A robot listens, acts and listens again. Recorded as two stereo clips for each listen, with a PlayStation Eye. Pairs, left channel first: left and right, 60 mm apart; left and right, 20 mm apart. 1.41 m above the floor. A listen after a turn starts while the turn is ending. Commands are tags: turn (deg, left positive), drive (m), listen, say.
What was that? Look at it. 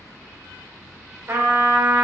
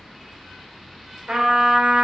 <turn deg="-45"/>
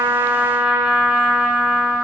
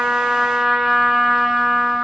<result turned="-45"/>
<turn deg="-15"/>
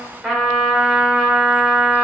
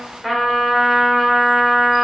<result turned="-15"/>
<say>Found it: a trumpet, straight ahead, 1 to 2 m away.</say>